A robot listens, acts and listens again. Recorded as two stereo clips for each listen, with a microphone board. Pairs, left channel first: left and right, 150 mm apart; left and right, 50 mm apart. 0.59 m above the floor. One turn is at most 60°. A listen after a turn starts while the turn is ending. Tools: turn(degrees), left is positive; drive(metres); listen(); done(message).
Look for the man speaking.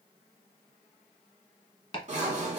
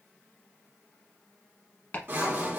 listen()
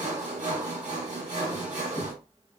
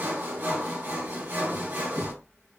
listen()
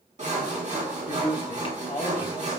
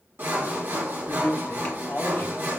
turn(degrees=45)
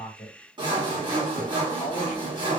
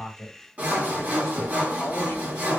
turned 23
turn(degrees=60)
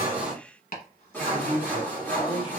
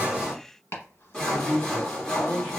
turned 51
turn(degrees=40)
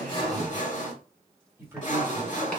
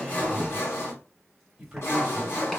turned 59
turn(degrees=-15)
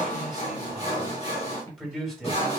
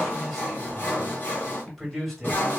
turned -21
done("Found it: a man speaking, straight ahead, 1 to 2 m away.")